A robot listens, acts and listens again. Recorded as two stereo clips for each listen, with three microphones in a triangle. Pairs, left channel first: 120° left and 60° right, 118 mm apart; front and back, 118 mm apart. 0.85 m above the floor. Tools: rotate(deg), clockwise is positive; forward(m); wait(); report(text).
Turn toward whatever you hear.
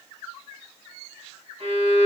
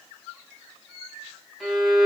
rotate(90)
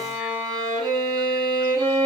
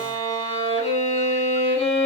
report("Found it: a violin, straight ahead.")